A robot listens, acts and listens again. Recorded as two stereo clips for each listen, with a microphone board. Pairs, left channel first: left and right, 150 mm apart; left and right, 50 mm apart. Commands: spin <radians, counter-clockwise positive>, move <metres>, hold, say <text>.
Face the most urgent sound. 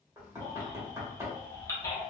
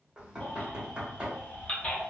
spin 0.44
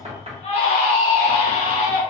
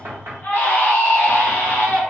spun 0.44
spin 2.27
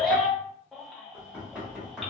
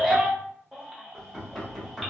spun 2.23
say Facing the baby crying.